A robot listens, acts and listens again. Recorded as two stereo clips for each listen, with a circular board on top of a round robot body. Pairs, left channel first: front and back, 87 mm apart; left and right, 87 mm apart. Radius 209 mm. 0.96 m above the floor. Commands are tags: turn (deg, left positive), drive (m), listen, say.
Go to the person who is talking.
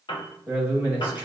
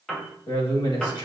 <turn deg="105"/>
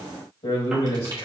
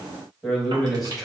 <drive m="1.0"/>
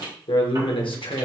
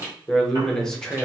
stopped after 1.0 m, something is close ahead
<say>I am next to the man speaking.</say>